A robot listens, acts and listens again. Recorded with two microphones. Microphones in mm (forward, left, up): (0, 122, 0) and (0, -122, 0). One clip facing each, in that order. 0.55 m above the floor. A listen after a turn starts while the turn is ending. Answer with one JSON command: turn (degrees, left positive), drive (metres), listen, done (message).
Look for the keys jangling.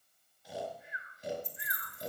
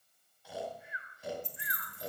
{"turn": -90}
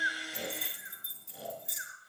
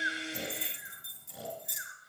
{"done": "Found it: keys jangling, straight ahead, 2 to 4 m away."}